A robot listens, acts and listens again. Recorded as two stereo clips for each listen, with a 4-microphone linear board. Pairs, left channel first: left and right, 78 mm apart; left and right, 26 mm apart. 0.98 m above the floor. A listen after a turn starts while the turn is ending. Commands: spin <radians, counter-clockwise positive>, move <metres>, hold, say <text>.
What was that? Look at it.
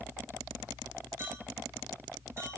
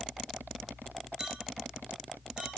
spin -0.61
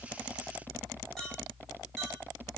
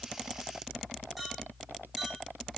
say Found it: a clink, straight ahead.